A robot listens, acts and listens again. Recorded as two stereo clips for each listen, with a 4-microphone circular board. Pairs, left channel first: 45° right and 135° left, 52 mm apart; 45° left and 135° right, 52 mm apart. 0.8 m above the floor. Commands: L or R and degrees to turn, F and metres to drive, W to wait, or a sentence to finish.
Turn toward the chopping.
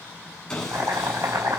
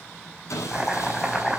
L140
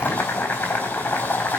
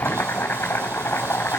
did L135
Facing the chopping.